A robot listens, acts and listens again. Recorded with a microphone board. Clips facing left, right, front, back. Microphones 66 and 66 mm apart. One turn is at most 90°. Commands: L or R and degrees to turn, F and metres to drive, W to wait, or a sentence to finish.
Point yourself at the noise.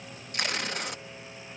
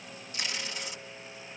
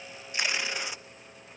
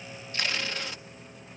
L70
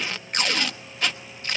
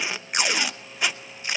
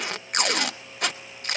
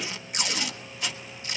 R15
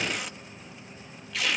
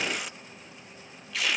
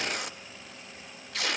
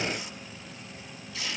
Found it: tape being pulled, straight ahead.